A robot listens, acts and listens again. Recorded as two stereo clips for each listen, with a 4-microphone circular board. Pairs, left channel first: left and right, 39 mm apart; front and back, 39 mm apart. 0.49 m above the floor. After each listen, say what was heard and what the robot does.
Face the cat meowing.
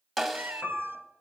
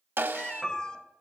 The cat meowing: 65° right. Turn 65° right.
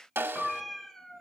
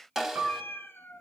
The cat meowing is now 10° left. Turn 10° left.
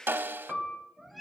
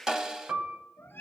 Found it: a cat meowing, straight ahead, under 1 m away.